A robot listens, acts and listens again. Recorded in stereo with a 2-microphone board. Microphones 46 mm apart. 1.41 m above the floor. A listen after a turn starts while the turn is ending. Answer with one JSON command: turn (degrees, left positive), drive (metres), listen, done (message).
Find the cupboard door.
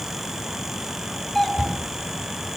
{"turn": -15}
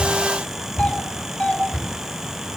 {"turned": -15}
{"turn": -150}
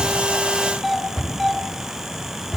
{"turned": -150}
{"done": "Facing the cupboard door, over 4 m away."}